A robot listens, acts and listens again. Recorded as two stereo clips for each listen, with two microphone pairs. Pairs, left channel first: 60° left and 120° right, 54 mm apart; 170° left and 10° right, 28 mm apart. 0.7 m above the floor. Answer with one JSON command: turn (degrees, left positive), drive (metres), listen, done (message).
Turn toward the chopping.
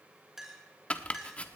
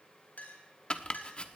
{"turn": 120}
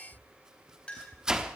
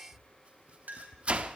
{"turn": -45}
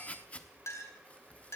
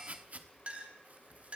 {"done": "Facing the chopping, 1 to 2 m away."}